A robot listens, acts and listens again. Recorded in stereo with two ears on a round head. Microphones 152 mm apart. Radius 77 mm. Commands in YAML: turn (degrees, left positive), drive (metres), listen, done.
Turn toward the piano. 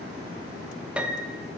turn: -30
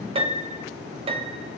turn: -145
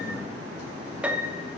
turn: -10
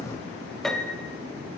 done: "Found it: a piano, straight ahead."